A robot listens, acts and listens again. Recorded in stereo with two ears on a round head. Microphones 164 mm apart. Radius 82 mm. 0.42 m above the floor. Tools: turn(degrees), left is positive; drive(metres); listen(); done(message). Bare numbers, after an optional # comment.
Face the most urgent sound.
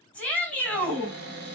turn(30)
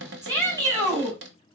# So it is at 20° right.
turn(-20)
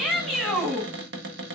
done("Facing the shout, 2 to 4 m away.")